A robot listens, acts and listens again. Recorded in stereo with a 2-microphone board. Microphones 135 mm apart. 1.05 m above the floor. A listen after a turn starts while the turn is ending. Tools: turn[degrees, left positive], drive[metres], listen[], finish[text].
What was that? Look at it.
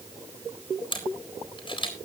Thought: The camera shutter: about 35° left or 145° left.
Action: turn[35]
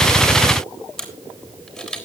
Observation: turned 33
Action: finish[Facing the camera shutter, 2 to 4 m away.]